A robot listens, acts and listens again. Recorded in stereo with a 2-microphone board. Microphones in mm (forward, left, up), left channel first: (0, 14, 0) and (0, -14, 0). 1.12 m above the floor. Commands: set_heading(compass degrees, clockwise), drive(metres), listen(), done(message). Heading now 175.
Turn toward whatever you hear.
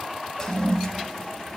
set_heading(155)
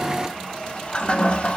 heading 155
set_heading(15)
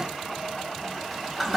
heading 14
done("Found it: a toilet flushing, straight ahead.")